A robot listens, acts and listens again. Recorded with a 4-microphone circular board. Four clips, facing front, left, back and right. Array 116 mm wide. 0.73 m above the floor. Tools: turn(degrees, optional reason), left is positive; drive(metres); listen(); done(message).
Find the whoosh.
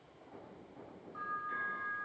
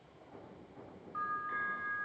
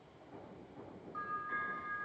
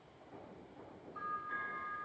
listen()
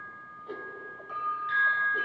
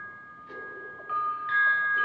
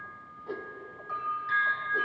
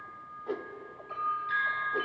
turn(degrees=-100, reason="The whoosh: 100° right.")
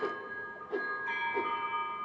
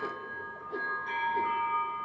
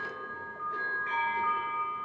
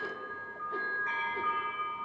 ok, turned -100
listen()
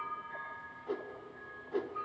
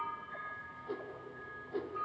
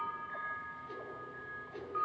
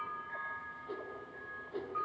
done("Found it: a whoosh, straight ahead, under 1 m away.")